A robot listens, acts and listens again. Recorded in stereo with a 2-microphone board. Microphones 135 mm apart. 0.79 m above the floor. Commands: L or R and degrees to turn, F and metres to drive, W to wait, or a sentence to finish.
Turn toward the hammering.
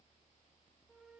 W
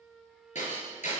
L60
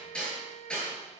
Found it: hammering, straight ahead.